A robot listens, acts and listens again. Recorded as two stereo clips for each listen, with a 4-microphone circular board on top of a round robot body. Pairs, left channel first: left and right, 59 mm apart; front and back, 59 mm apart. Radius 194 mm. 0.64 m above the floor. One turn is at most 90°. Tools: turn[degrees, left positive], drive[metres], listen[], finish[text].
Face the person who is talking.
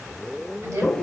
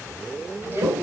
Thought: The woman speaking: 125° right.
Action: turn[-90]
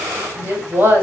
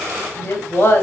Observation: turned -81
Thought: The woman speaking is now 40° right.
Action: turn[-40]
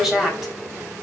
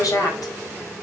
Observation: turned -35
Action: finish[Facing the woman speaking.]